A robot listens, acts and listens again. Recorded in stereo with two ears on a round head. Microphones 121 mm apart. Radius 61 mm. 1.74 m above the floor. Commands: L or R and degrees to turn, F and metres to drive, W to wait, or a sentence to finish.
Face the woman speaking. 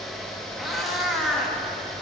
W
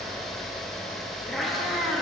W
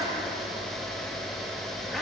I can't make out a woman speaking, only a cat meowing.